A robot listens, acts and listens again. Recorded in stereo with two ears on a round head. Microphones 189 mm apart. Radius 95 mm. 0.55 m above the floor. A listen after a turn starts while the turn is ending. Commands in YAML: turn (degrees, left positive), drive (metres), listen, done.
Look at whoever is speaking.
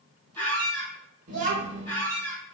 turn: -35
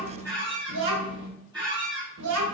turn: -110
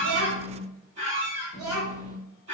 turn: -20
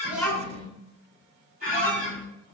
done: "Facing the child speaking, under 1 m away."